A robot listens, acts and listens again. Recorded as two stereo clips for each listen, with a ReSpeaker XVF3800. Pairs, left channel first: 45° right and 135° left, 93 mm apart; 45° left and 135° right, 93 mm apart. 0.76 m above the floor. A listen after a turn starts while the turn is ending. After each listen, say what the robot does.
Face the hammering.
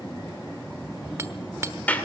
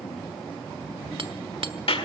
Turn 165° right.
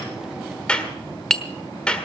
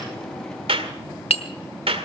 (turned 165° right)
Turn 40° left.
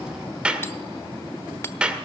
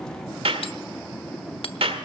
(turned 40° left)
Keep listening.
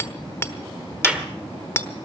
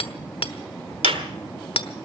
Turn 20° left.
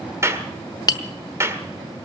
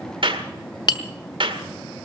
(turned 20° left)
Facing the hammering.